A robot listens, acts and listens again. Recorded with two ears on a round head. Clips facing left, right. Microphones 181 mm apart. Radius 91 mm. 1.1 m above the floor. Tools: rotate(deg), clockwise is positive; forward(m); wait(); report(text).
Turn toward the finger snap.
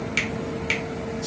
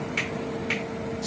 rotate(-40)
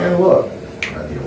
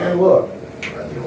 rotate(-90)
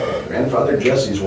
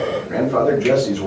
wait()
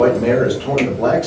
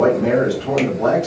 wait()
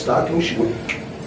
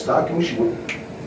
rotate(15)
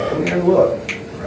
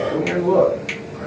report("Facing the finger snap, 1 to 2 m away.")